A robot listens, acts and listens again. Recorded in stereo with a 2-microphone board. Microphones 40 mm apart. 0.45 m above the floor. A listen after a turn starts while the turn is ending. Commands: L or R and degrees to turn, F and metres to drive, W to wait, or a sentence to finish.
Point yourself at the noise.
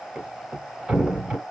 R35
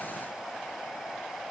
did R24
W
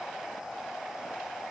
I heard a thud, but can't make it out now. It was about 10° right or 125° right.